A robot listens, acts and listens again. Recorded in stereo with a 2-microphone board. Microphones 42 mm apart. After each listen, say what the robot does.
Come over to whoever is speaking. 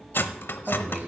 Turn 30° right.
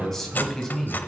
Turn 10° left.
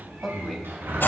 Drive 1.0 m forward.
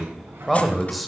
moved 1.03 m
Drive 1.0 m forward.
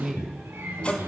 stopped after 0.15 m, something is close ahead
I am next to the man speaking.